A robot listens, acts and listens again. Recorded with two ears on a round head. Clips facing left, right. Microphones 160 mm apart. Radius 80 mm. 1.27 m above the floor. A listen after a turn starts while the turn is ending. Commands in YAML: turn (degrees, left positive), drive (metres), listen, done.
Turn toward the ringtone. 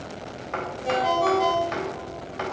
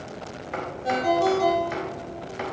turn: -50
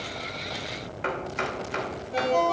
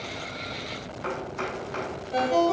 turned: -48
turn: -85
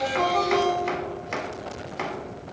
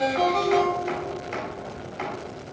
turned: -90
done: "Found it: a ringtone, straight ahead."